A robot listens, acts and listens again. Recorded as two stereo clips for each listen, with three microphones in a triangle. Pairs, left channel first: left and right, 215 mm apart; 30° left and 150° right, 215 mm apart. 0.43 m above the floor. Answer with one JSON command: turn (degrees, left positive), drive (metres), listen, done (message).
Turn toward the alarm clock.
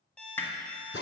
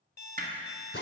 {"done": "Found it: an alarm clock, straight ahead, under 1 m away."}